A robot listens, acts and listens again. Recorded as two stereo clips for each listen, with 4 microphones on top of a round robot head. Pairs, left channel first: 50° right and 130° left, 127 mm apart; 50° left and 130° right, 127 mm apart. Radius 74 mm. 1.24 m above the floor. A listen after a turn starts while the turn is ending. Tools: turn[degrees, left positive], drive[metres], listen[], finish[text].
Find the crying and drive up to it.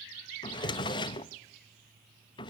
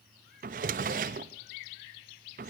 Action: listen[]
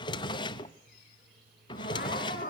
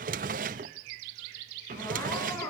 Thought: The crying: 20° right.
Action: turn[-20]
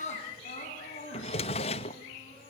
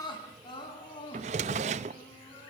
Thought: The crying is now 10° right.
Action: turn[-10]
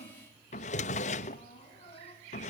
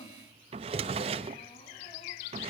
Action: listen[]
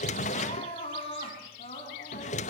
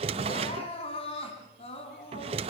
Action: drive[1.0]
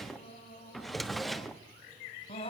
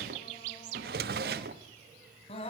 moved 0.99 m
Action: drive[1.0]
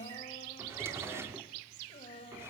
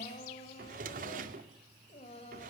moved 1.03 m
Action: drive[1.0]
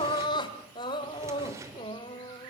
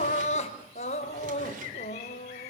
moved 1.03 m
Thought: The crying is now 10° left.
Action: turn[10]
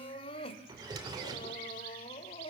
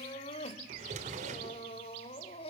Action: drive[1.0]
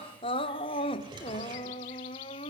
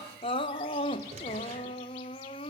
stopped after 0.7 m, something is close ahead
Action: finish[I am next to the crying.]